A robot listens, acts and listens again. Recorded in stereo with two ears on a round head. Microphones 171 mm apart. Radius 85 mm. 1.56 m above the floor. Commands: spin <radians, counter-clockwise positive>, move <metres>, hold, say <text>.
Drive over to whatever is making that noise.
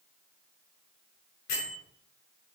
spin 1.22
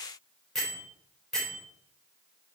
move 1.0
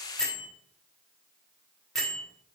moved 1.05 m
move 1.0
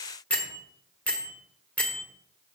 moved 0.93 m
move 1.0
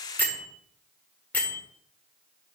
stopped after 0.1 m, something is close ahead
spin 0.17
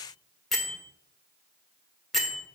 say I am next to the bell.